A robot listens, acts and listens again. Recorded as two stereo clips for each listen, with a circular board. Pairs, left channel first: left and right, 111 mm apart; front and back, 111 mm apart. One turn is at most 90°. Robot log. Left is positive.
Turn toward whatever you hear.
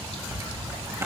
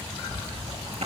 note: The zipper: 155° right.
cmd yaw -90
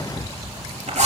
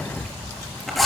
note: The zipper is now 90° right.
cmd yaw -90
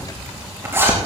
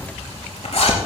note: The zipper is now 20° right.
cmd yaw -20
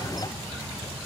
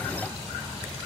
cmd idle
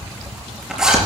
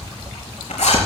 end: Found it: a zipper, straight ahead.